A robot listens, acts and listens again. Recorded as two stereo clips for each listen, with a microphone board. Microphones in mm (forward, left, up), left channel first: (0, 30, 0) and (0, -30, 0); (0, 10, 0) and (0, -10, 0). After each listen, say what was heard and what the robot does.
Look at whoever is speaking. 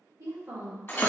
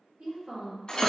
The woman speaking: about 60° right or 120° right. Turn 60° right.
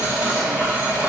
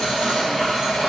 Keep listening.
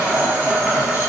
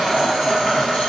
Keep listening.
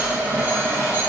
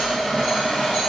I heard a woman speaking, but can't make it out now. It was about straight ahead or 60° right.